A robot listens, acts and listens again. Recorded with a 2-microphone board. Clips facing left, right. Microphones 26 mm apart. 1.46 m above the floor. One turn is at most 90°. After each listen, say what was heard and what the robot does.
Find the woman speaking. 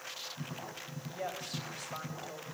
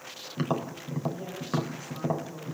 The woman speaking: about 70° left or 110° left. Turn 70° left.
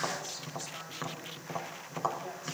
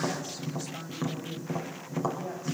Facing the woman speaking.